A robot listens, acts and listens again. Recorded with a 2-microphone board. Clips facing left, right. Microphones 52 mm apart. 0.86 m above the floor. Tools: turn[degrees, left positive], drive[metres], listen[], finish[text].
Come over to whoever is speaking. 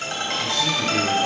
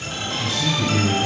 Thought: The man speaking: about 35° left or 145° left.
Action: turn[35]
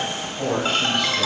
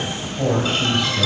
Action: drive[1.0]
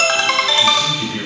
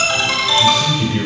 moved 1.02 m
Action: drive[1.0]
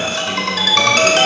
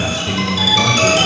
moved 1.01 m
Action: listen[]
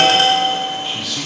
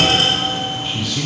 Action: drive[1.0]
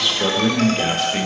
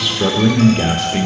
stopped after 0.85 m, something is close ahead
Action: finish[Arrived at the man speaking, straight ahead.]